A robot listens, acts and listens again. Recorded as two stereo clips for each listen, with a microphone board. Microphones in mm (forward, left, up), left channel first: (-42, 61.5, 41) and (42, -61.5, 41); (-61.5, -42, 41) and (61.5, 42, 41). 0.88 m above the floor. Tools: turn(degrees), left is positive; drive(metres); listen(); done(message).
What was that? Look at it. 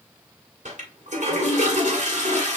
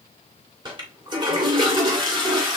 turn(degrees=-25)
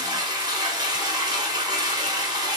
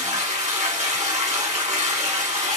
done("Facing the toilet flushing, 2 to 4 m away.")